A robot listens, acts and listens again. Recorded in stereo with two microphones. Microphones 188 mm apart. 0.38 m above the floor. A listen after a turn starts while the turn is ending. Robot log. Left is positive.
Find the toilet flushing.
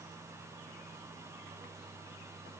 cmd idle
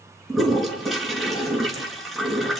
cmd yaw +30
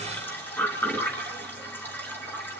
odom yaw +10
cmd yaw +30
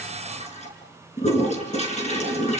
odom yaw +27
note: So it is at 145° left.
cmd yaw +145
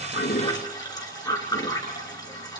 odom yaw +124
note: The toilet flushing is now 20° left.
cmd yaw +20
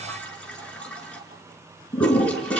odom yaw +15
end: Found it: a toilet flushing, straight ahead, over 4 m away.